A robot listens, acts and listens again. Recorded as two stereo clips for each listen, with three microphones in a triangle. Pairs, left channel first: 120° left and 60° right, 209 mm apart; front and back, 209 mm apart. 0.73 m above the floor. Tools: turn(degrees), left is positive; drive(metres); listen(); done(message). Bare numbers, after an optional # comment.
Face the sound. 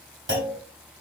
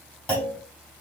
# The clunk: 85° right.
turn(-85)
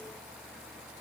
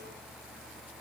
done("I heard a clunk from this way, but can't make it out now.")